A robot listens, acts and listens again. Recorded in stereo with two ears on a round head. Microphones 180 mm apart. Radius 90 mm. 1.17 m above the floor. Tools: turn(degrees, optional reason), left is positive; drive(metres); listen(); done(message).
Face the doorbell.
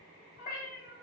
listen()
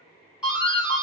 turn(degrees=-30)
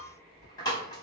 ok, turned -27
turn(degrees=20, reason="So it is at 20° left.")
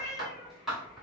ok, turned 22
done("Found it: a doorbell, straight ahead, 1 to 2 m away.")